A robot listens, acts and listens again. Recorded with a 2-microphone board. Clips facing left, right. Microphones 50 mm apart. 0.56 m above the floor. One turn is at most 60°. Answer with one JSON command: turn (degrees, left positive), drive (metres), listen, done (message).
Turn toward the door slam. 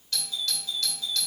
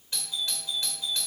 {"listen": true}
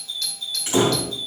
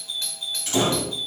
{"turn": 20}
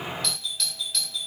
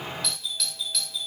{"listen": true}
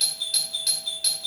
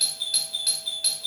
{"done": "I heard a door slam, but can't make it out now. It was about straight ahead or 140° left."}